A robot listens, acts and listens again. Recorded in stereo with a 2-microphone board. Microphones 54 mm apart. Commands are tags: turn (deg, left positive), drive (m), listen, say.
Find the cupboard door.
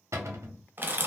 <turn deg="-65"/>
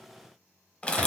<listen/>
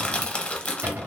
<turn deg="-45"/>
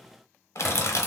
<listen/>
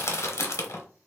<listen/>
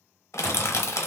<say>I heard a cupboard door from this way, but can't make it out now.</say>